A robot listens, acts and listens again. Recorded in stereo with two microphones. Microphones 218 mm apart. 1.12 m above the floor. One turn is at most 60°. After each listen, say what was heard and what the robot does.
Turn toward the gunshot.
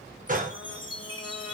The gunshot: about 40° right or 140° right. Turn 40° right.
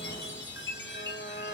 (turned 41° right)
Keep listening.
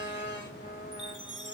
I heard a gunshot, but can't make it out now. It was about 5° left or 100° right.